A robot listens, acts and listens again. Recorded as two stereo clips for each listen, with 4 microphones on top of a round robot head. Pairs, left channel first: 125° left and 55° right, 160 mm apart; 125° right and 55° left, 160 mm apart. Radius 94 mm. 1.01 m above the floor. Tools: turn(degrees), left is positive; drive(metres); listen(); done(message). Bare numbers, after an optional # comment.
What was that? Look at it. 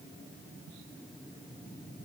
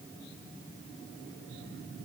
listen()
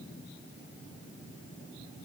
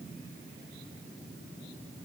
listen()
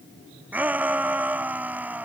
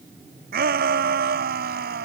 # The shout: 25° left.
turn(25)
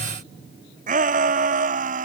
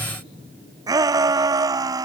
# The shout is now 15° right.
turn(-15)
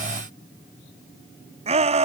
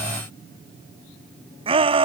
done("Facing the shout.")